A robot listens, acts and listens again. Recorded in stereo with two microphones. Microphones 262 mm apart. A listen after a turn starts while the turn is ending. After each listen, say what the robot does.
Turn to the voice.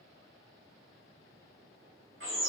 Keep listening.
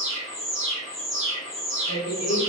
Turn 65° left.
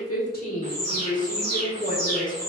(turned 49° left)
Turn 35° left.
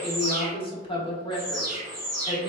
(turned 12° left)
Turn 20° left.
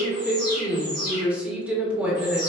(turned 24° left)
Facing the woman speaking.